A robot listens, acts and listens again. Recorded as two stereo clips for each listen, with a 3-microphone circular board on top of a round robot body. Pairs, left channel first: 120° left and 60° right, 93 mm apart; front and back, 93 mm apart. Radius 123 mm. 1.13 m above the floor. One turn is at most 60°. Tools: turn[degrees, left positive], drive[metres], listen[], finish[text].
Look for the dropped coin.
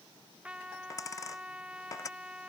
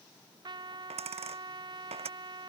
Thought: The dropped coin: straight behind.
Action: turn[60]
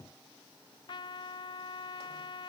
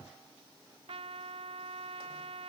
Thought: Nothing new. It was at 120° left.
Action: turn[60]
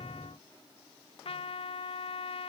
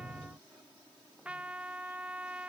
Thought: Nothing new. It was at 60° left.
Action: turn[60]
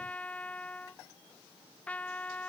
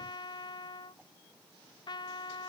Action: finish[Facing where the dropped coin came from. I can't hear it now.]